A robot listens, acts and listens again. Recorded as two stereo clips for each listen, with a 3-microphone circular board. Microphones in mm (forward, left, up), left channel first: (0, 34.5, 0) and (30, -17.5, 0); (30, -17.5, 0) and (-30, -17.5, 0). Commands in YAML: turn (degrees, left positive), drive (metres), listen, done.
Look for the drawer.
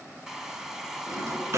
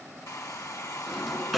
turn: -90
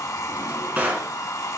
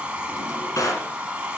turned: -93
done: "Facing the drawer, 1 to 2 m away."